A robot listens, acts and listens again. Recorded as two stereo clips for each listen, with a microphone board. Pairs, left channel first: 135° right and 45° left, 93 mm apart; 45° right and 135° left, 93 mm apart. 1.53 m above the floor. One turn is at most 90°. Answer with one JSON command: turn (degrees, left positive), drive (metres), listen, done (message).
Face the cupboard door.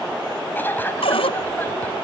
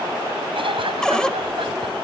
{"turn": -90}
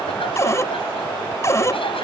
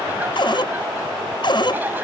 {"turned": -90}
{"turn": -75}
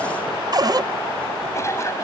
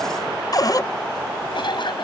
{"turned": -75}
{"done": "Facing the cupboard door."}